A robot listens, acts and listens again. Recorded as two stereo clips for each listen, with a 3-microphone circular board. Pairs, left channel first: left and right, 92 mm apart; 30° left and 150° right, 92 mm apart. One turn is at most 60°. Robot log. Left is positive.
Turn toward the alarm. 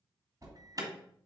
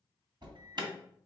note: The alarm: 130° right.
cmd yaw -60
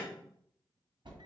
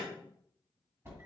note: The alarm is now 90° right.
cmd yaw -60
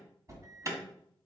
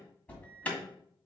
note: The alarm is now 45° right.
cmd yaw -45
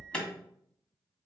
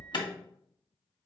note: The alarm is now 15° left.
cmd yaw +15
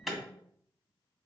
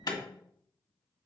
end: Found it: an alarm, straight ahead.